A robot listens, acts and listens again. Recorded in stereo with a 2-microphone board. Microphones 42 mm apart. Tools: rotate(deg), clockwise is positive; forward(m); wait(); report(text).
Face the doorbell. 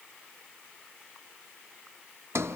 wait()
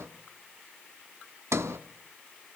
wait()
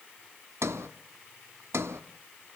report("I can't make out a doorbell to turn to.")